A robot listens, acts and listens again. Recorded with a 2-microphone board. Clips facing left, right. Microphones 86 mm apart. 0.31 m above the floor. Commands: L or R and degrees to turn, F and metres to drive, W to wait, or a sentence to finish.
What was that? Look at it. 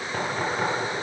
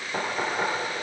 R30
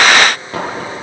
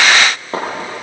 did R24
R145
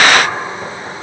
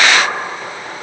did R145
Found it: knocking, straight ahead, over 4 m away.